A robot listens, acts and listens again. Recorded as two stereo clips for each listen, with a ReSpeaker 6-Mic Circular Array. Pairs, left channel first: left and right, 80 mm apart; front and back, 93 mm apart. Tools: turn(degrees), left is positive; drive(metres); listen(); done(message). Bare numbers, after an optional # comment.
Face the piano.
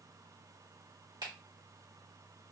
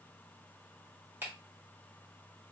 listen()
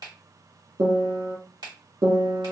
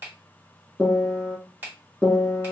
# The piano: 75° right.
turn(-75)
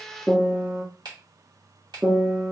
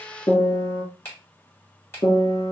# The piano is now 25° right.
turn(-25)
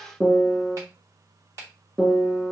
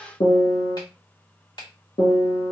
done("Found it: a piano, straight ahead.")